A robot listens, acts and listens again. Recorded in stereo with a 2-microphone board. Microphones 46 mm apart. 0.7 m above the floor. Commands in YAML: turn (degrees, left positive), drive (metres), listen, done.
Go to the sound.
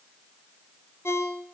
turn: 70
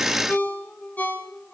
turn: 40
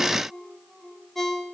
drive: 1.0
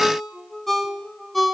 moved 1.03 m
drive: 1.0
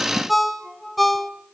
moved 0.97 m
drive: 1.0
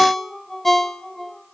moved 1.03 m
turn: 10
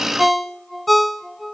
drive: 1.0
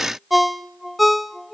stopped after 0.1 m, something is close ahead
done: "I am next to the ringtone."